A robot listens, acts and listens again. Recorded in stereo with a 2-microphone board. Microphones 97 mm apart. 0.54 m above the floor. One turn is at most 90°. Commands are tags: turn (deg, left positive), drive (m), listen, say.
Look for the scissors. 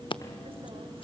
<turn deg="60"/>
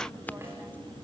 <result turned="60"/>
<turn deg="20"/>
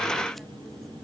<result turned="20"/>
<listen/>
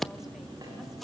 <say>Found it: scissors, straight ahead, under 1 m away.</say>